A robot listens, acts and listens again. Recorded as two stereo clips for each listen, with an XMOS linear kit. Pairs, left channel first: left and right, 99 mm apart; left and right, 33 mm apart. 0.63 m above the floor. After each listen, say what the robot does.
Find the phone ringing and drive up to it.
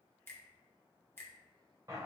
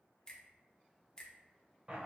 Keep listening.
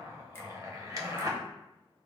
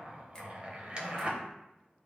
Keep listening.
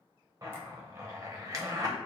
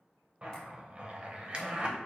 I can't make out a phone ringing to turn to.